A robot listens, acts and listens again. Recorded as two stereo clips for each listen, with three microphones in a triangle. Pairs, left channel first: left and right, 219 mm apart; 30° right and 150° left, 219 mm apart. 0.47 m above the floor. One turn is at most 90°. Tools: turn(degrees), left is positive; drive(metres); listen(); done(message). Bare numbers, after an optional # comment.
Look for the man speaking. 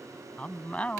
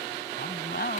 done("Found it: a man speaking, straight ahead.")